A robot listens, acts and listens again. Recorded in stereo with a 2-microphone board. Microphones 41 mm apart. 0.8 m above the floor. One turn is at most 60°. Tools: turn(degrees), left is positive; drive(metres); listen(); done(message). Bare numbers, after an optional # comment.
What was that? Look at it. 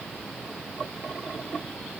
listen()
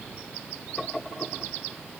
listen()
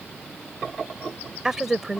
turn(-30)
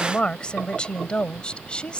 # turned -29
# So it is at 20° left.
turn(20)
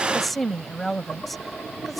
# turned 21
done("Found it: a woman speaking, straight ahead.")